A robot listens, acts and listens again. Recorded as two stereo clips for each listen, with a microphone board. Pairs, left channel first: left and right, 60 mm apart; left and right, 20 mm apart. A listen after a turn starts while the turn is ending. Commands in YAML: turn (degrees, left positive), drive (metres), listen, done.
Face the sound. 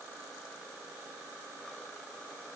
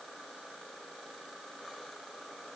listen: true
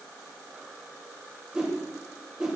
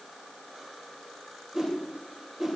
turn: -15
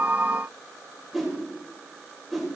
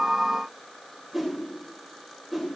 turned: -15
done: "Found it: a whoosh, straight ahead, 2 to 4 m away."